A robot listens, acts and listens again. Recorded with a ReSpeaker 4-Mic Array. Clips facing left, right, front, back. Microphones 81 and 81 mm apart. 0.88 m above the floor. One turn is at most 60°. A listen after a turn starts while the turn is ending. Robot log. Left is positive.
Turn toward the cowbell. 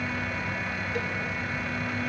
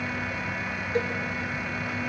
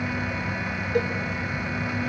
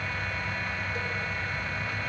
note: The cowbell: 30° right.
cmd yaw -30
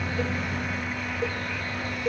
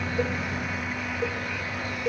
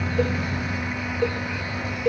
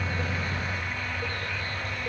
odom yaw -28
end: Found it: a cowbell, straight ahead, under 1 m away.